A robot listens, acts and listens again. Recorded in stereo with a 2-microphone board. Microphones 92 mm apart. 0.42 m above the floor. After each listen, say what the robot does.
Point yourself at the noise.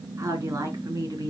Turn 40° right.
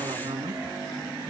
Turn 100° right.
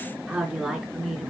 Turn 10° right.
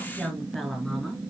Found it: a woman speaking, straight ahead.